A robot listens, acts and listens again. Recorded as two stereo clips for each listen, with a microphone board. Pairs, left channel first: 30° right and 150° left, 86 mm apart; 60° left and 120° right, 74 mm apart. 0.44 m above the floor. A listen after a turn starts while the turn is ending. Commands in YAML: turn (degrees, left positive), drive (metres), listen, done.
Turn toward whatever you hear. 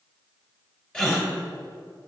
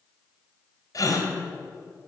turn: 45
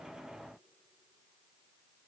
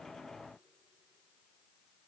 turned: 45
done: "Facing where the gasp came from. I can't hear it now."